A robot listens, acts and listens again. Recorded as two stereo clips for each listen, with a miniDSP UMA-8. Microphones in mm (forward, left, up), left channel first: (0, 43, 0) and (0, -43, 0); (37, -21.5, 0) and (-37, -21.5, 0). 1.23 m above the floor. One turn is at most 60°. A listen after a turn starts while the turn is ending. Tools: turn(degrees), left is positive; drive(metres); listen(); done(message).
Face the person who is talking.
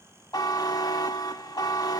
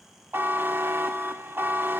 listen()
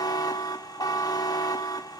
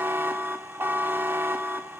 listen()
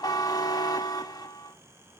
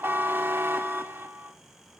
done("I can't make out anyone speaking, only a buzzer.")